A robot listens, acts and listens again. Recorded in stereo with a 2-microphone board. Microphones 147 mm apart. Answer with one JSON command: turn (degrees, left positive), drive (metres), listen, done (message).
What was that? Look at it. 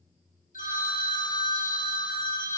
{"turn": 65}
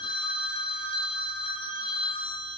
{"turn": 40}
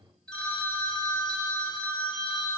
{"turn": 10}
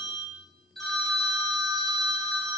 {"done": "Found it: a phone ringing, straight ahead, under 1 m away."}